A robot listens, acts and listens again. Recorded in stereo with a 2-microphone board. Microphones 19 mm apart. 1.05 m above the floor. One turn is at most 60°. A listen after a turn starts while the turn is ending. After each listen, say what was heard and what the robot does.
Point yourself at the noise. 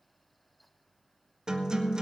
The guitar: about 40° right or 140° right. Turn 40° right.
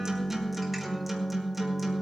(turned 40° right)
Facing the guitar.